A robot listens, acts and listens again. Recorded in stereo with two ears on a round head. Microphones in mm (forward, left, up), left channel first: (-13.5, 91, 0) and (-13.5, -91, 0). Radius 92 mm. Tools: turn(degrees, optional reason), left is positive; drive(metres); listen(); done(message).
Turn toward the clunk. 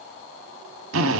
listen()
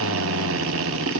listen()
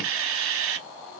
done("I can't make out a clunk, only a drill.")